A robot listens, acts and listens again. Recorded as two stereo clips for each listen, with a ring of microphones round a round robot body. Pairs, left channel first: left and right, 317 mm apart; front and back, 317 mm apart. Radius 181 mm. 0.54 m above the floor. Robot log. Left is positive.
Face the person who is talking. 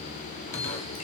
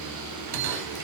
cmd idle
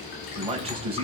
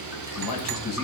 note: The man speaking: 20° right.
cmd yaw -20
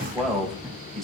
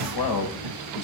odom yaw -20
end: Found it: a man speaking, straight ahead.